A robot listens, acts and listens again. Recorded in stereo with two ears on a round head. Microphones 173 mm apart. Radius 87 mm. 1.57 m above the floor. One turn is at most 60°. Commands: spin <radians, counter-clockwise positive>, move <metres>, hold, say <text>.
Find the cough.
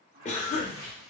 spin 0.61
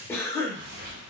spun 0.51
spin 0.26
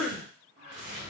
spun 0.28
say Facing the cough, under 1 m away.